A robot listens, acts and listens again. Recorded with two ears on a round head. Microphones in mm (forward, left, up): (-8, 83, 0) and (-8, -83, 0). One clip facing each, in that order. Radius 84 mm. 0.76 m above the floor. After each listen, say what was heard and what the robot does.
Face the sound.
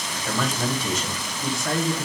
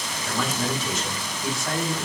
The man speaking: about 75° left or 105° left. Turn 75° left.
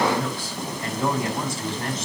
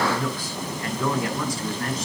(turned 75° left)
So it is at 25° left. Turn 25° left.
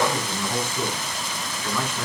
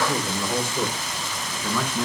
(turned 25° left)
The man speaking is now 10° right. Turn 10° right.
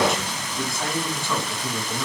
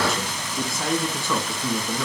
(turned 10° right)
Found it: a man speaking, straight ahead, over 4 m away.